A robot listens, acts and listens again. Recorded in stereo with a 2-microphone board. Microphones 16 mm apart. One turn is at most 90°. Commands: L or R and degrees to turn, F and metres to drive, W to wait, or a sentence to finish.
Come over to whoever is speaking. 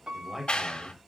R30
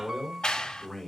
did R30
L20
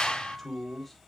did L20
F1.0
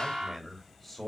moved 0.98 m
F1.0
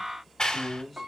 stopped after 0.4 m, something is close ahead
Something is in my way. I am facing the man speaking but have not reached it.